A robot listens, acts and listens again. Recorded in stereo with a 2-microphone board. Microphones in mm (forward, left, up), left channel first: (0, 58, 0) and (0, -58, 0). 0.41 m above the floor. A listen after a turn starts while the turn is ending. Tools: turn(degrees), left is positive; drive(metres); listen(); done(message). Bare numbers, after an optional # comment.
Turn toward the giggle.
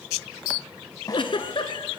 # The giggle: about 50° left or 130° left.
turn(50)
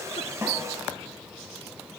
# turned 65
listen()
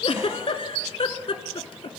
# So it is at 60° left.
turn(60)
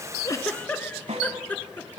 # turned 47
# The giggle is now 15° left.
turn(15)
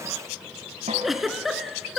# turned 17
done("Found it: a giggle, straight ahead.")